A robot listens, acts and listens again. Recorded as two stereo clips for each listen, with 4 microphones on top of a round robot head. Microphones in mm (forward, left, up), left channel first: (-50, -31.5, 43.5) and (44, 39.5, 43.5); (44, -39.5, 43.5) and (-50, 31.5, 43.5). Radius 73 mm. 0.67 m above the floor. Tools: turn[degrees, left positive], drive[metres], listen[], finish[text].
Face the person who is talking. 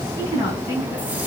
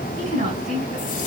Thought: The woman speaking: 150° left.
Action: turn[150]
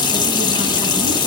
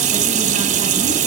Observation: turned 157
Action: listen[]
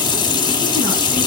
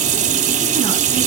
Action: listen[]
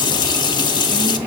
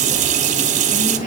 Action: finish[I heard a woman speaking from this way, but can't make it out now.]